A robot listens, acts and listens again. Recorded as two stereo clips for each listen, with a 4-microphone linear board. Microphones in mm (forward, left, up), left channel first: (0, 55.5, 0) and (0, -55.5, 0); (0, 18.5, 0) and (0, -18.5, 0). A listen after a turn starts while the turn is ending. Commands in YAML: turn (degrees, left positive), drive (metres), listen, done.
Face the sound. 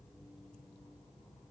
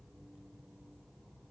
listen: true
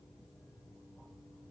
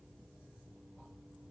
listen: true
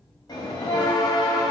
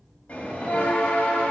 turn: 40
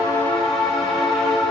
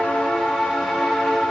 done: "Found it: a bell, straight ahead."